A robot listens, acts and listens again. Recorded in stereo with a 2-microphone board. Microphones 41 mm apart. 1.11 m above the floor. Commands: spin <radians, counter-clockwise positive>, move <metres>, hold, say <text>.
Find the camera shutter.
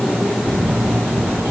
spin -1.57
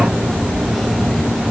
say Facing the camera shutter.